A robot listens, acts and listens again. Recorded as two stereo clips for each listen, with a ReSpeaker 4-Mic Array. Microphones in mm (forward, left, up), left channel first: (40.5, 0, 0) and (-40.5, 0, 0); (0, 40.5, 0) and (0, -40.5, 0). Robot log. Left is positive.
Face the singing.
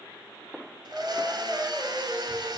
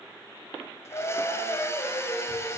note: The singing: 105° left.
cmd yaw +105
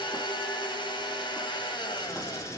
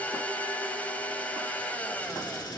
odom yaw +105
cmd idle
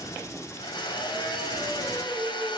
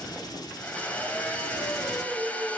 note: The singing is now 15° right.
cmd yaw -15
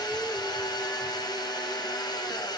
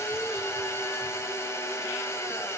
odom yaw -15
cmd idle
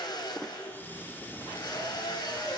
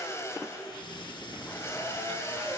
cmd idle
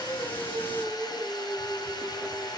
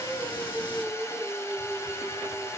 end: Facing the singing, over 4 m away.